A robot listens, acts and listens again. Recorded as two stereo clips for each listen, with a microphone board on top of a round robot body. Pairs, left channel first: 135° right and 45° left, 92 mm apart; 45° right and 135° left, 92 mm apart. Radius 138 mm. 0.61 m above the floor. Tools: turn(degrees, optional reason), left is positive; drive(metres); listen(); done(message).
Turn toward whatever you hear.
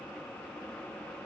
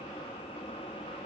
listen()
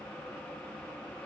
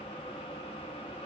listen()
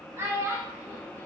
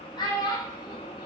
turn(degrees=-15, reason="The child speaking: 15° right.")
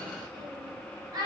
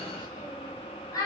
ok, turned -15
done("Facing the child speaking, 1 to 2 m away.")